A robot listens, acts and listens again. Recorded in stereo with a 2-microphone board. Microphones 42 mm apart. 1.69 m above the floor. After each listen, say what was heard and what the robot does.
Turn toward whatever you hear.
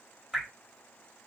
Turn 30° left.
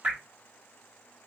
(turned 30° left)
So it is at 30° right. Turn 30° right.
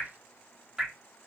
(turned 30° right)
The dripping is now 10° right. Turn 10° right.
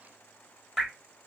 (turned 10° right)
Facing the dripping.